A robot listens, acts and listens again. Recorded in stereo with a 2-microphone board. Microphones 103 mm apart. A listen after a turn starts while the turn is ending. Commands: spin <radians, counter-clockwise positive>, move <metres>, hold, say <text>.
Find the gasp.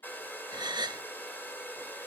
spin -0.79
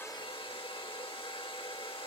hold
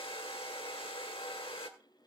say I heard a gasp, but can't make it out now. It was about straight ahead or 90° right.